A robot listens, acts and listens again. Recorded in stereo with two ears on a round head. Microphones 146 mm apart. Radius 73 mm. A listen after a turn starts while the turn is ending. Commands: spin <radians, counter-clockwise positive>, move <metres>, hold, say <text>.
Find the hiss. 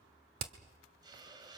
spin -0.44
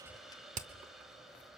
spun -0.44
say Facing the hiss, 1 to 2 m away.